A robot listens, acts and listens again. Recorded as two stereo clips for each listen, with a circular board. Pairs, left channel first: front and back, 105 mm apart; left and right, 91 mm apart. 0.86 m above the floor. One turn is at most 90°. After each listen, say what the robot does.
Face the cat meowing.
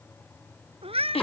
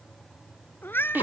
Turn 90° left.
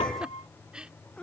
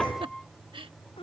Turn 80° left.
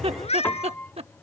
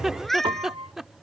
Found it: a cat meowing, straight ahead.